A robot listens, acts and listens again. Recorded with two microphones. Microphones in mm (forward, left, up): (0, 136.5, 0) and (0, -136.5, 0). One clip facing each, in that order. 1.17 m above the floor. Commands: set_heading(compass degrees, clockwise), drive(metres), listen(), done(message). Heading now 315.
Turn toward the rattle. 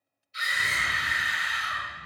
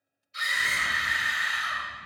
set_heading(250)
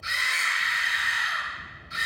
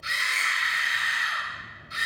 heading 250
done("Facing the rattle.")